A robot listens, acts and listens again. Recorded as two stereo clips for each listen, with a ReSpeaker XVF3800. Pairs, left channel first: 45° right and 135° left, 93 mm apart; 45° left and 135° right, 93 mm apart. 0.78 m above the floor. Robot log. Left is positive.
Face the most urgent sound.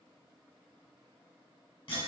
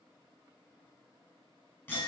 cmd idle
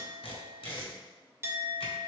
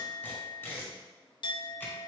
cmd idle
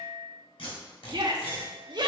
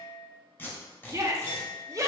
note: The shout: 170° left.
cmd yaw +170
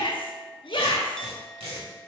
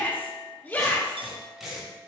note: The shout is now 25° right.
cmd yaw -25
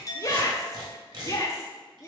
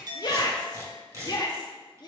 end: Found it: a shout, straight ahead.